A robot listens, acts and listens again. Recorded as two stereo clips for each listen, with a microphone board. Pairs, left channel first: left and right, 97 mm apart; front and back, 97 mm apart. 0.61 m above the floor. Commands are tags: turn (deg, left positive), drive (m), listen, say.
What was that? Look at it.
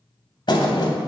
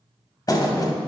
<turn deg="50"/>
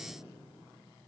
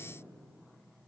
<say>Facing where the thud came from. I can't hear it now.</say>